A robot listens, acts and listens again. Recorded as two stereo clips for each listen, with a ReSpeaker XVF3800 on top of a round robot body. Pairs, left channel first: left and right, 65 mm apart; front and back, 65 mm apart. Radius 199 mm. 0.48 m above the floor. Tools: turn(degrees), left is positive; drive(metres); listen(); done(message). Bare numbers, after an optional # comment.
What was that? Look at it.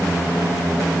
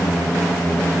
listen()
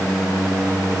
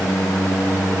listen()
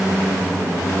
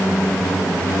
done("I can't make out anything.")